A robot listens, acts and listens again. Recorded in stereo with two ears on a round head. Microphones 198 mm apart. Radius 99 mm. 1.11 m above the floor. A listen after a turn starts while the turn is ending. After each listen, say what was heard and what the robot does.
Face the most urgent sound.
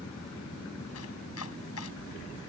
Keep listening.
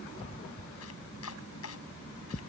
Keep listening.
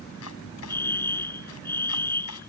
Turn 30° left.
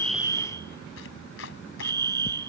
So it is at 20° right. Turn 20° right.
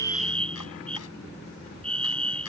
Found it: a fire alarm, straight ahead.